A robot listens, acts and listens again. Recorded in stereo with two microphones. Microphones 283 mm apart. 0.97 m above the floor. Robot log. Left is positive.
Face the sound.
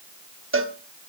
note: The cowbell: about 45° right or 135° right.
cmd yaw -45
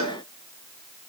note: So it is at 90° right.
cmd yaw -90
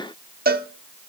note: The cowbell is now 35° right.
cmd yaw -35
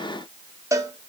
note: The cowbell is now 10° right.
cmd yaw -10
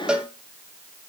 end: Facing the cowbell, 1 to 2 m away.